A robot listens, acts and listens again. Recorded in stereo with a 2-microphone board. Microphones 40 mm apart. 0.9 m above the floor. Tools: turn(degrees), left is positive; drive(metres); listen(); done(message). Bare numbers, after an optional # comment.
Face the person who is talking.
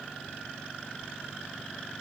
listen()
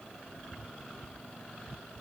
listen()
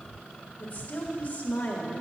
# The woman speaking: about 40° left or 140° left.
turn(40)
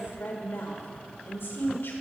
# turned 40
# So it is at 100° left.
turn(100)
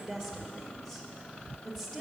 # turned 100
done("Facing the woman speaking, 1 to 2 m away.")